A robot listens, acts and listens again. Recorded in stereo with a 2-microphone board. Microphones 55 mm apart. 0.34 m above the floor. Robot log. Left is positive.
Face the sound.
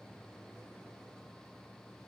cmd idle
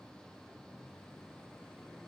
cmd idle
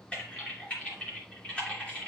note: The typing on a keyboard: about 25° left or 155° left.
cmd yaw +25
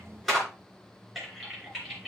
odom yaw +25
end: Found it: typing on a keyboard, straight ahead.